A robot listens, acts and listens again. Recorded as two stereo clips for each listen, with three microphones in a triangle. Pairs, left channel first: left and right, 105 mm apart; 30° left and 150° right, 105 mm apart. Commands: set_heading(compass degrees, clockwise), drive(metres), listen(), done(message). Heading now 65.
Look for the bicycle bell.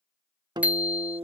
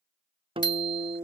set_heading(80)
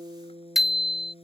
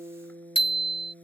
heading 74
done("Found it: a bicycle bell, straight ahead.")